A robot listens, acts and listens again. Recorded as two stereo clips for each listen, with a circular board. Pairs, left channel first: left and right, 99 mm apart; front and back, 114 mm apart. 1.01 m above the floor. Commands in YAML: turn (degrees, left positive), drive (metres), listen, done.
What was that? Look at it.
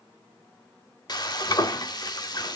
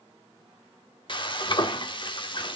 turn: 45
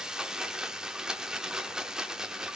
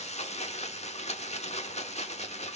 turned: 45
done: "Found it: frying, straight ahead."